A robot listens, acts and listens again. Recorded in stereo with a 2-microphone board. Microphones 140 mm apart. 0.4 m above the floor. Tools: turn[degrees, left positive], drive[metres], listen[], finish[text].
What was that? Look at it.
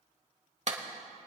Thought: The clap: about 55° right or 125° right.
Action: turn[-55]
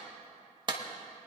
Thought: So it is at 45° right.
Action: turn[-45]
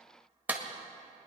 Thought: The clap is now 15° right.
Action: turn[-15]
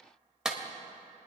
Action: finish[Found it: a clap, straight ahead.]